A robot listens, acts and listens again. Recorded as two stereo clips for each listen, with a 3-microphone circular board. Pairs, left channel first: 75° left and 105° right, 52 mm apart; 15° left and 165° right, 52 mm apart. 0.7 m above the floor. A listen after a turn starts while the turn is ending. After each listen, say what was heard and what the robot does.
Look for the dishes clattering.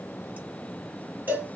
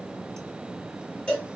Keep listening.
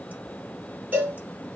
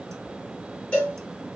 Keep listening.
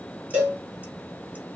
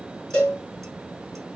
I can't make out dishes clattering to turn to.